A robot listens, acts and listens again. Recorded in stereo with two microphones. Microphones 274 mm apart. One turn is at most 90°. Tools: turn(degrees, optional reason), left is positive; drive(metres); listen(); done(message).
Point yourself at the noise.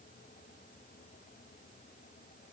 listen()
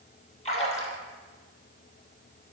turn(degrees=25, reason="The splash: about 25° left or 155° left.")
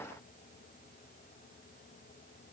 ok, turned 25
listen()
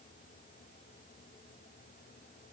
done("I heard a splash, but can't make it out now. It was about straight ahead or 130° left.")